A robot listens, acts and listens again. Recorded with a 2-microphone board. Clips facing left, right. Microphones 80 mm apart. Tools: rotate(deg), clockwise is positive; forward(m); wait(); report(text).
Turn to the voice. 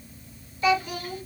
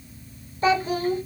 rotate(35)
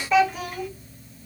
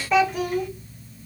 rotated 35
report("Facing the child speaking.")